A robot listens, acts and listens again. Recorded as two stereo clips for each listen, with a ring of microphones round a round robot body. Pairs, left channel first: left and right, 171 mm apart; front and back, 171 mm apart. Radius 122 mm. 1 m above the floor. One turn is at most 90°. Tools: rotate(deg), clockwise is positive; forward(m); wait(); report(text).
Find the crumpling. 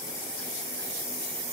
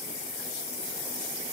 wait()
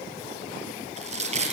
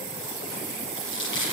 rotate(40)
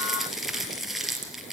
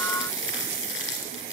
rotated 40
report("Found it: crumpling, straight ahead, over 4 m away.")